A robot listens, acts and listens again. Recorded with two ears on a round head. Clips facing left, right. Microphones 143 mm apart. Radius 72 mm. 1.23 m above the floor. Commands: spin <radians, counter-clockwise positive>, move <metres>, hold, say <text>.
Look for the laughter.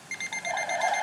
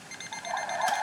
spin 0.61
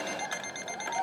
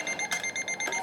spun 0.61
spin 2.01
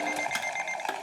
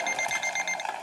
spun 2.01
say Facing the laughter.